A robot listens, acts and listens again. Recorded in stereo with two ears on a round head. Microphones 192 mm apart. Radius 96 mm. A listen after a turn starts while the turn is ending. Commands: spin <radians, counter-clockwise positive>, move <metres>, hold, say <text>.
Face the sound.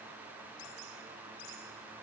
hold
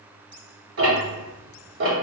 spin -1.05
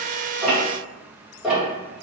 say Facing the ticking, 1 to 2 m away.